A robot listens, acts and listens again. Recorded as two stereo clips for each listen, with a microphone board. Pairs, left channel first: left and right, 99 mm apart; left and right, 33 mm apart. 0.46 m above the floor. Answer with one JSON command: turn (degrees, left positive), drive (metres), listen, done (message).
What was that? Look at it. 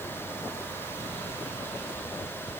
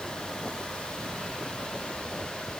{"listen": true}
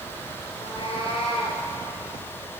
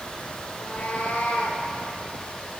{"turn": 55}
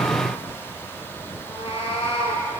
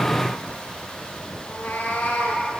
{"turn": 65}
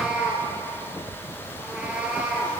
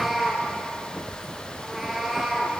{"turn": -10}
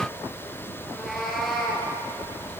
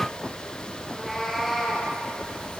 {"done": "Found it: a cat meowing, straight ahead, 2 to 4 m away."}